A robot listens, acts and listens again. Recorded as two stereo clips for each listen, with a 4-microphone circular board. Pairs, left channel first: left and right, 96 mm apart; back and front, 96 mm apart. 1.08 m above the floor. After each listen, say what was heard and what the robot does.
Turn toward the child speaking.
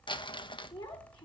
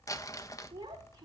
The child speaking: 55° left. Turn 55° left.
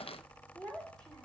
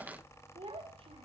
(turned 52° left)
Facing the child speaking, 2 to 4 m away.